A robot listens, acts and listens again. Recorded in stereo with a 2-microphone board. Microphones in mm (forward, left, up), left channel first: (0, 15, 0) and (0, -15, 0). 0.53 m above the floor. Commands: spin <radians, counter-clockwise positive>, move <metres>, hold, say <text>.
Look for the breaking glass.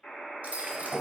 spin -1.22
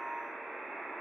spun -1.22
hold
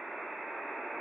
say I heard breaking glass, but can't make it out now. It was about straight ahead or 40° right.